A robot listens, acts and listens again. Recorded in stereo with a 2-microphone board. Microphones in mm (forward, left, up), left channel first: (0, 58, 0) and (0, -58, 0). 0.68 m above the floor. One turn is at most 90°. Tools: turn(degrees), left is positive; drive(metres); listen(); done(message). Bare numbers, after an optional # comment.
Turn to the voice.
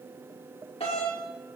listen()
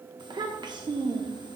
# The child speaking: about 40° right or 140° right.
turn(-40)
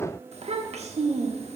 # So it is at 95° right.
turn(-90)
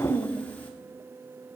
# The child speaking is now 15° left.
turn(15)
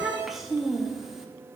done("Found it: a child speaking, straight ahead, 1 to 2 m away.")